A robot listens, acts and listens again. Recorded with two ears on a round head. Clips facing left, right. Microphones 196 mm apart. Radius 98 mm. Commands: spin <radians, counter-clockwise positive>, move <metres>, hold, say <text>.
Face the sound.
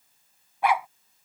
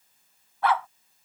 spin 0.52
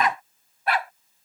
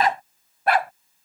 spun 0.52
spin -0.79
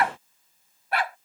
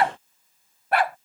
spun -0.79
spin -0.79
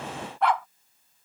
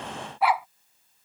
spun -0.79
spin -0.17
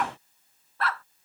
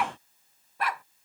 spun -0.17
spin -0.26
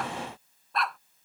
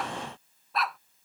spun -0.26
say Facing the dog barking.